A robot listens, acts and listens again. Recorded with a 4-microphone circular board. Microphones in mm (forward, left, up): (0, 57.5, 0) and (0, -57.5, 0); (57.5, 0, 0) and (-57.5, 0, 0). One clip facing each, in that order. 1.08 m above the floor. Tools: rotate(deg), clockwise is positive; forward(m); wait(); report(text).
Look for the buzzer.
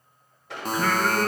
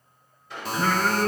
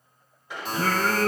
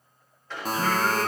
rotate(-135)
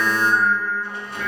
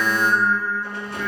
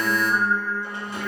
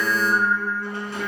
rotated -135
wait()
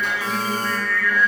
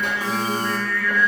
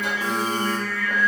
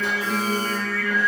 wait()
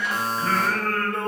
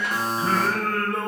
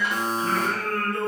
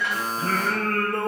rotate(15)
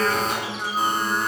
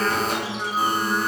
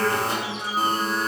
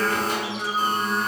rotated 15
wait()
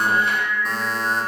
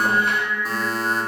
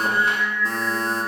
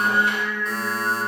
report("Found it: a buzzer, straight ahead.")